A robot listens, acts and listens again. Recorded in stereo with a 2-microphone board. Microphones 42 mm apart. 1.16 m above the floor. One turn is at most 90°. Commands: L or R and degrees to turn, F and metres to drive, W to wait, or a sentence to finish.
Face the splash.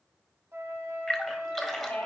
L30
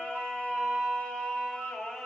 W
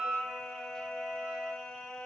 I heard a splash, but can't make it out now. It was about 30° right or 150° left.